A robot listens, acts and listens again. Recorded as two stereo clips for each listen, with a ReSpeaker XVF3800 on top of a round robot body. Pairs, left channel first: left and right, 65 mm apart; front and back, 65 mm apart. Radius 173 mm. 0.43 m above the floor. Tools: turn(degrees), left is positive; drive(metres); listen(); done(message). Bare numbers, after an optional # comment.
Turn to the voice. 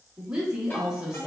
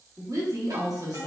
# The woman speaking: 165° right.
turn(-165)
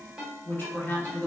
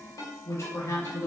# The woman speaking is now 35° left.
turn(35)
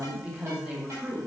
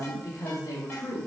# The woman speaking is now 15° right.
turn(-15)
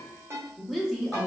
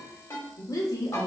done("Found it: a woman speaking, straight ahead, 1 to 2 m away.")